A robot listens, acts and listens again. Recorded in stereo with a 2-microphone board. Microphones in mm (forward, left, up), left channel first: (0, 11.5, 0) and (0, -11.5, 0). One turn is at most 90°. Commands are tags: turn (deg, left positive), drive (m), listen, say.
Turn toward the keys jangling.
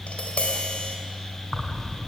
<turn deg="30"/>
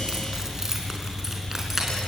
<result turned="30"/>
<turn deg="-15"/>
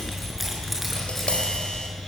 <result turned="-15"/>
<say>Found it: keys jangling, straight ahead.</say>